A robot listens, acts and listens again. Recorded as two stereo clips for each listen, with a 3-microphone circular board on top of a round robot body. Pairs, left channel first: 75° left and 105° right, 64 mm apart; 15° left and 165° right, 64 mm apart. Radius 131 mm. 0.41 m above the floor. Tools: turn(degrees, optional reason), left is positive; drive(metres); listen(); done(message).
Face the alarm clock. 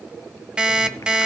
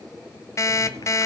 turn(degrees=-30, reason="The alarm clock: 30° right.")
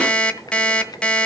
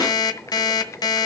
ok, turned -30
done("Found it: an alarm clock, straight ahead.")